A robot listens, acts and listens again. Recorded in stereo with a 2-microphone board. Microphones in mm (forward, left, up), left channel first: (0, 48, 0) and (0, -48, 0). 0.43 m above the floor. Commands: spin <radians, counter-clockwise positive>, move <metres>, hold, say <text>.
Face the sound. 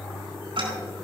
spin -1.13
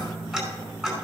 say Found it: ticking, straight ahead, over 4 m away.